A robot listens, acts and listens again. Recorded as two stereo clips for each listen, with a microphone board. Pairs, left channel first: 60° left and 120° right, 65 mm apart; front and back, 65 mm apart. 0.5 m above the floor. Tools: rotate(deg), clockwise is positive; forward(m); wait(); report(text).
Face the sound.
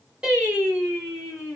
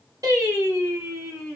rotate(-160)
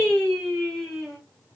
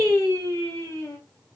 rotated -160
rotate(20)
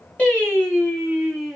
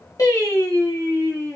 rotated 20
rotate(30)
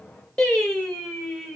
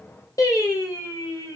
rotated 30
rotate(30)
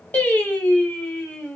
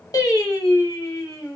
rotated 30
report("Found it: singing, straight ahead, 1 to 2 m away.")